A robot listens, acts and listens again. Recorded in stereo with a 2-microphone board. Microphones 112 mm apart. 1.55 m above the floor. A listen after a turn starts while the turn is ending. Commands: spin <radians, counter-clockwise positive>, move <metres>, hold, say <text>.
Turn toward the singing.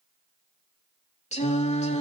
spin 1.57
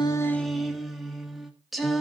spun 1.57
say Facing the singing.